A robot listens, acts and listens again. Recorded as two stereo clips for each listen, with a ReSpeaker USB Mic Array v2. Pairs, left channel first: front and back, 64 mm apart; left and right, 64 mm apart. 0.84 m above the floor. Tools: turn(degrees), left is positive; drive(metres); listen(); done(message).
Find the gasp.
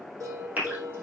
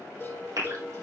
turn(degrees=-115)
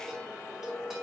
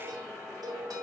done("I heard a gasp from this way, but can't make it out now.")